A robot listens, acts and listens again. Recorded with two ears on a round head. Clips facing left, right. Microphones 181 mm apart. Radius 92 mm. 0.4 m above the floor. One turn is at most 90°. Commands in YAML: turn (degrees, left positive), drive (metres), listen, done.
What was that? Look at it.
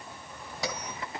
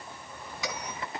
turn: 35
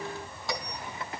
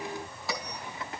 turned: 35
done: "Facing the bell, 2 to 4 m away."